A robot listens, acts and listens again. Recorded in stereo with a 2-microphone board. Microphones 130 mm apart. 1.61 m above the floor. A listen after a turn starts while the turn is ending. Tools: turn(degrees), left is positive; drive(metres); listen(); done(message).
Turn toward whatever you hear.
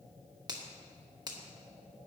turn(degrees=-30)
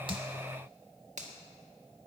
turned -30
turn(degrees=-115)
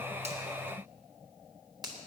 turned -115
turn(degrees=-30)
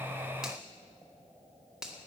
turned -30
done("Found it: a finger snap, straight ahead.")